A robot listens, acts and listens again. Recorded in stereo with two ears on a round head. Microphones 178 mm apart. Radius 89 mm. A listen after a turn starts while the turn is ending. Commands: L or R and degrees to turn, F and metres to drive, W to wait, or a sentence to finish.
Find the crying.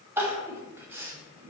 R30
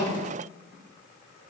W
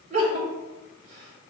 R140
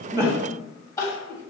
L15
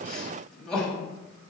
Facing the crying.